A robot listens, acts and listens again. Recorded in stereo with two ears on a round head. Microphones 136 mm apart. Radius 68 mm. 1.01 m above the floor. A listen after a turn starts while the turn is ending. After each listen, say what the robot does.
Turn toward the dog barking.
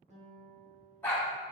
Turn 30° left.
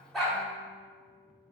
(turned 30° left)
Keep listening.
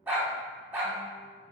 Turn 15° right.
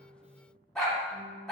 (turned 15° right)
Found it: a dog barking, straight ahead.